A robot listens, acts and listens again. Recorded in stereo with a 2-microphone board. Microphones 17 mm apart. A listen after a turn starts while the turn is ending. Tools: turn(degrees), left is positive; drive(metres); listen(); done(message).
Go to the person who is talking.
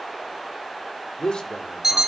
turn(degrees=70)
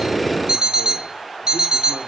listen()
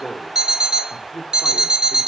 turn(degrees=40)
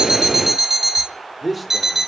turn(degrees=-10)
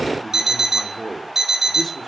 drive(metres=1.0)
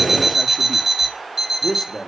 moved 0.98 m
drive(metres=1.0)
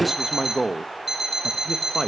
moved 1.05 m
drive(metres=1.0)
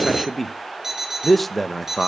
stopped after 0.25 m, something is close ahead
turn(degrees=10)
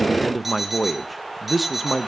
done("Arrived at the man speaking, straight ahead.")